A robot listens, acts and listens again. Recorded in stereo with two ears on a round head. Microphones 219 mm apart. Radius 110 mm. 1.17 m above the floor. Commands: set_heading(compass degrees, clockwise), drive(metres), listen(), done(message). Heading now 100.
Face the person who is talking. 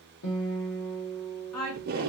set_heading(30)
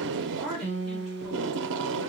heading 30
done("Found it: a woman speaking, straight ahead, 2 to 4 m away.")